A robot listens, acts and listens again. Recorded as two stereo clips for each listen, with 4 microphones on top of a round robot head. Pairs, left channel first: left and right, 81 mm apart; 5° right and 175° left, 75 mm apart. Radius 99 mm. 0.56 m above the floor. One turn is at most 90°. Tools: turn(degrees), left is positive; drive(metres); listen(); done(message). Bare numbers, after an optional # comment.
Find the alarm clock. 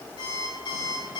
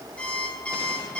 # The alarm clock: 65° left.
turn(65)
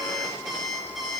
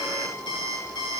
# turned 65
done("Facing the alarm clock, over 4 m away.")